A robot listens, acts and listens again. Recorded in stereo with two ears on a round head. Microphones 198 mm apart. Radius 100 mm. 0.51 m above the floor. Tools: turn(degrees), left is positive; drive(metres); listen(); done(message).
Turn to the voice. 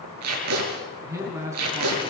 turn(degrees=-30)
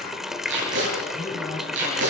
turn(degrees=15)
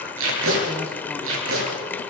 listen()
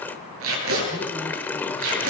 listen()
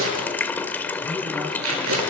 done("I heard a man speaking from this way, but can't make it out now.")